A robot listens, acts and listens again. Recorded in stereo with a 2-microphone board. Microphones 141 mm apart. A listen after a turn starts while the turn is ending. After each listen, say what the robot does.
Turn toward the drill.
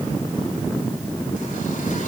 Keep listening.
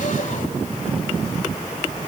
Keep listening.
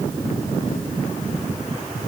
I can't make out a drill.